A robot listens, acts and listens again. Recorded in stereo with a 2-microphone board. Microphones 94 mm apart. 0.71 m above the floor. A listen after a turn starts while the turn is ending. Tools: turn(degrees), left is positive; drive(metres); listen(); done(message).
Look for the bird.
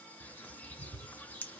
turn(degrees=15)
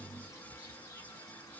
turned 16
turn(degrees=150)
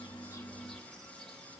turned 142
listen()
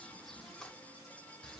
done("Found it: a bird, straight ahead.")